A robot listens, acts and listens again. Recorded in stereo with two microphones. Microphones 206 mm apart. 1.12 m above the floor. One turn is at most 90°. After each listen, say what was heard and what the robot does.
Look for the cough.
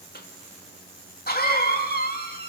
The cough: about 45° left or 135° left. Turn 45° left.
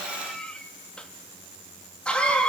Found it: a cough, straight ahead, 2 to 4 m away.